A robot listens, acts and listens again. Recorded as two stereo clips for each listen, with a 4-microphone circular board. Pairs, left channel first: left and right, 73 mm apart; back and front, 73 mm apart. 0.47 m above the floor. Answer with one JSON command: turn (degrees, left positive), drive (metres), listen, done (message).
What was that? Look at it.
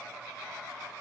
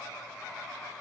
{"listen": true}
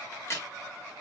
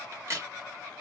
{"turn": 45}
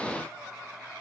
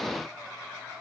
{"done": "I heard a crack from this way, but can't make it out now."}